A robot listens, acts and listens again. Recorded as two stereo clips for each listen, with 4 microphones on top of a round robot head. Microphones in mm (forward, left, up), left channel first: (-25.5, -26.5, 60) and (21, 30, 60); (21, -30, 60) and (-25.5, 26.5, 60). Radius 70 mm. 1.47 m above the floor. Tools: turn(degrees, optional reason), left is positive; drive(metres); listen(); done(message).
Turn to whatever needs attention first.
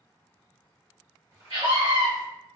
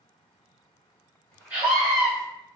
turn(degrees=60, reason="The scream: 60° left.")
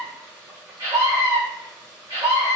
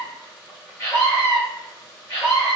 done("Facing the scream.")